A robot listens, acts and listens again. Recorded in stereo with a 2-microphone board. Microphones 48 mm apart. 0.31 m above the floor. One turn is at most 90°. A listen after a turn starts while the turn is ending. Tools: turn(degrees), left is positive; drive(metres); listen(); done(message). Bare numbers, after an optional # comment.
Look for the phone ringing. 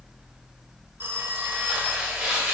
# The phone ringing: about 40° right or 140° right.
turn(-40)
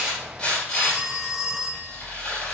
# So it is at 10° right.
turn(-10)
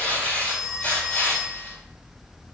done("Found it: a phone ringing, straight ahead, under 1 m away.")